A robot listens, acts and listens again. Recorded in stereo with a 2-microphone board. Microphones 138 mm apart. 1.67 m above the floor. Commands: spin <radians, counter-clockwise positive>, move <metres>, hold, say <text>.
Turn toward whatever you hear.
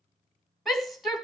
spin 0.52
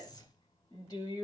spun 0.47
spin 2.62
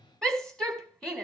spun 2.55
say Facing the shout, 2 to 4 m away.